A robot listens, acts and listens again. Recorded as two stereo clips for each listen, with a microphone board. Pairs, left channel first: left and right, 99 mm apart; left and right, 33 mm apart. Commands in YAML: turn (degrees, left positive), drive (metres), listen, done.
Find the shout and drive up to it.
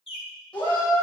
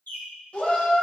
turn: 45
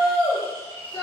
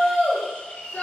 turn: 90
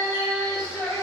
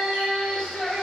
drive: 1.0
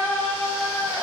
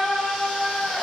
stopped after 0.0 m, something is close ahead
turn: -10
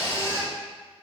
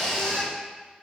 done: "Something is in my way. I am facing the shout but have not reached it."